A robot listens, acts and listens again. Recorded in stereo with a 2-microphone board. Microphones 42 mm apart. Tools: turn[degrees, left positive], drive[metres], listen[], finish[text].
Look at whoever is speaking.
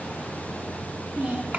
Thought: The child speaking: about 40° right or 140° right.
Action: turn[-40]
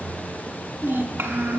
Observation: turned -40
Thought: So it is at 100° right.
Action: turn[-100]
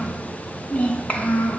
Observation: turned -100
Thought: The child speaking is now 35° left.
Action: turn[35]
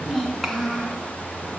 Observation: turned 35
Action: finish[Facing the child speaking.]